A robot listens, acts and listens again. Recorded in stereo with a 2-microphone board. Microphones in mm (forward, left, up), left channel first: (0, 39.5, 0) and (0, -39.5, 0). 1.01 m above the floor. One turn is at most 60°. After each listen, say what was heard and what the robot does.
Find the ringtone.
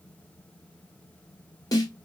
Keep listening.
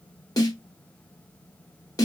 Keep listening.
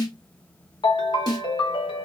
Turn 60° left.
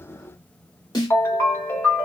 So it is at 35° left. Turn 35° left.
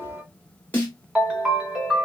Found it: a ringtone, straight ahead, under 1 m away.